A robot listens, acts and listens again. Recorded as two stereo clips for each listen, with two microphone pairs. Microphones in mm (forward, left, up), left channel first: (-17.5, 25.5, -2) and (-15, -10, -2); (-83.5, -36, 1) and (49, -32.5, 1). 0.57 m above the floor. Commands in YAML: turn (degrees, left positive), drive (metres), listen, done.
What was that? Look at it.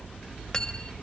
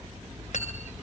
turn: 160
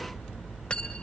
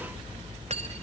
turn: 30
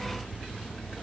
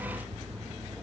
listen: true
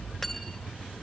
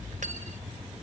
listen: true
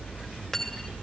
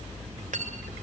turn: 10
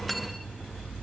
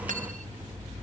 listen: true
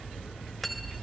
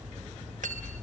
done: "Found it: cutlery clinking, straight ahead."